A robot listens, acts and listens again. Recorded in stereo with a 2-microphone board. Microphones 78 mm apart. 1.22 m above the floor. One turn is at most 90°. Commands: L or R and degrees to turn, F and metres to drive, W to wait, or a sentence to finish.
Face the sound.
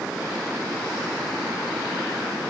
W
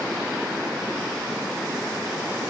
W
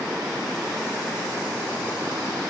I can't make out anything to turn to.